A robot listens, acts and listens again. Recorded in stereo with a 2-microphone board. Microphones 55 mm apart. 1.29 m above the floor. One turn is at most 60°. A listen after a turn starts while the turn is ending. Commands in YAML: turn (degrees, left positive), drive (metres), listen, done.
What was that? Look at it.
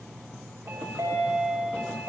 turn: -60
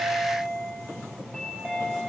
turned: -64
done: "Found it: a chime, straight ahead, 2 to 4 m away."